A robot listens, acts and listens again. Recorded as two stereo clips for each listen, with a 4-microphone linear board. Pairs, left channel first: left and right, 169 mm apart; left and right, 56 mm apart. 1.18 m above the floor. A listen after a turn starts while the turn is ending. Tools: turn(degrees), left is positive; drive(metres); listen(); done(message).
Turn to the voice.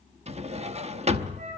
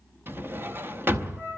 listen()
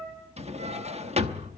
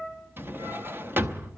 listen()
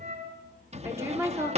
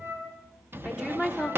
turn(degrees=-15)
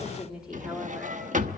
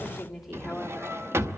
turn(degrees=-30)
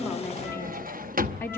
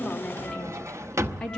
turn(degrees=15)
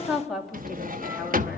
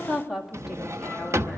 done("Found it: a woman speaking, straight ahead.")